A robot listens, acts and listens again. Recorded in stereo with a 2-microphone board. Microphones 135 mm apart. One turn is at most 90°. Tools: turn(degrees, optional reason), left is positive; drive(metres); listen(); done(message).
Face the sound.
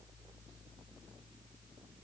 listen()
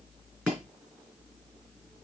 turn(degrees=-30)
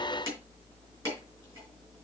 turn(degrees=25, reason="So it is at 25° left.")
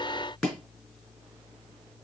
done("Found it: chopping, straight ahead, over 4 m away.")